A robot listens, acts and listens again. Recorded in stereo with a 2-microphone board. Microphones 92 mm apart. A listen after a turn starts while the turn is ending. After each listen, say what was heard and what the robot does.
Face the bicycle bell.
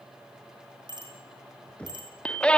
The bicycle bell: about 50° right or 130° right. Turn 50° right.
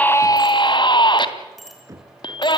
Facing the bicycle bell, over 4 m away.